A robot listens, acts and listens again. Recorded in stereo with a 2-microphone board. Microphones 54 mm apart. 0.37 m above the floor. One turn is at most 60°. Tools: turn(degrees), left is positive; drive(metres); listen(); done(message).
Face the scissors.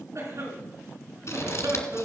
turn(degrees=55)
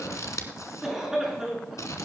turn(degrees=60)
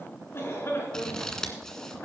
turn(degrees=10)
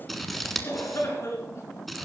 done("Found it: scissors, straight ahead, 1 to 2 m away.")